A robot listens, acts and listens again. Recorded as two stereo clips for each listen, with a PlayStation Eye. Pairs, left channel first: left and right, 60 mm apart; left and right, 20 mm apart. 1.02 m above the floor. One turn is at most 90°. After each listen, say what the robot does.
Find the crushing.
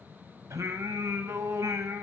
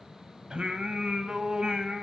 Keep listening.
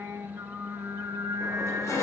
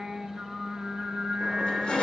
Turn 50° left.
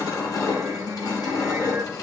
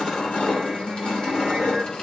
Turn 80° left.
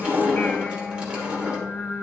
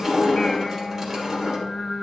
Turn 15° right.
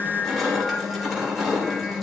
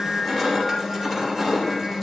Facing the crushing.